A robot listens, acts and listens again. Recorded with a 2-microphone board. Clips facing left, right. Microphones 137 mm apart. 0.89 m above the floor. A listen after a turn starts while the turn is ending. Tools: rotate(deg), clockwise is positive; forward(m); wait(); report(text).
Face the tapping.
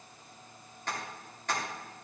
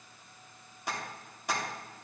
rotate(30)
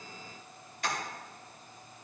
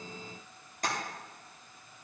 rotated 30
rotate(140)
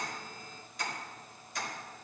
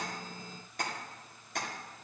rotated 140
rotate(60)
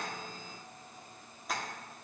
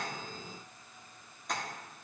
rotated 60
report("Found it: tapping, straight ahead, 1 to 2 m away.")